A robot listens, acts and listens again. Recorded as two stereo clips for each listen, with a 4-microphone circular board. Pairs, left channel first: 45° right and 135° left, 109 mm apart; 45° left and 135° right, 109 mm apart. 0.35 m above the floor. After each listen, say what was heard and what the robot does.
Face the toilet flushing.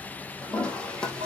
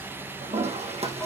The toilet flushing: 125° right. Turn 125° right.
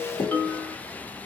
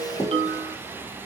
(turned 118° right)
The toilet flushing is now 10° right. Turn 10° right.
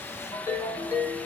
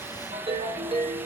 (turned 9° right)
Keep listening.
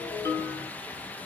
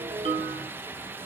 Keep listening.
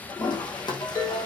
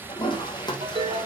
Found it: a toilet flushing, straight ahead.